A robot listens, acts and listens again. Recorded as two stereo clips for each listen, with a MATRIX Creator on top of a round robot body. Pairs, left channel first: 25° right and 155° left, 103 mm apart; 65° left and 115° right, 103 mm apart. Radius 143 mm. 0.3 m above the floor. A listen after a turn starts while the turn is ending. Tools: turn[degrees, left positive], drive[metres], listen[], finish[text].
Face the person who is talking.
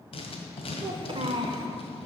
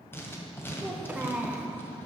Thought: The child speaking: 170° left.
Action: turn[170]
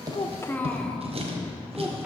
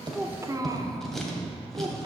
Thought: The child speaking is now 95° right.
Action: turn[-95]
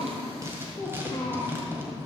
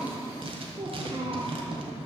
Thought: The child speaking is now 85° right.
Action: turn[-85]
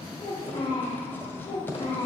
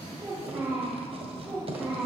Thought: The child speaking is now 45° right.
Action: turn[-45]
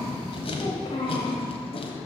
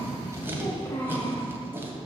Action: finish[Found it: a child speaking, straight ahead.]